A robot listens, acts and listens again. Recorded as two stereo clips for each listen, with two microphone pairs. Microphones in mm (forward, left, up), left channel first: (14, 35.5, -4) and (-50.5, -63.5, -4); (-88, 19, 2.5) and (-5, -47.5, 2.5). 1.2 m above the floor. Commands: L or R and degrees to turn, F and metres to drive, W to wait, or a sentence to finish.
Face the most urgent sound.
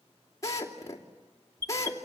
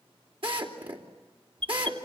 R70
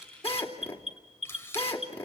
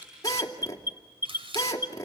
L25
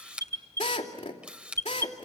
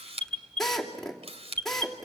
Facing the alarm, 2 to 4 m away.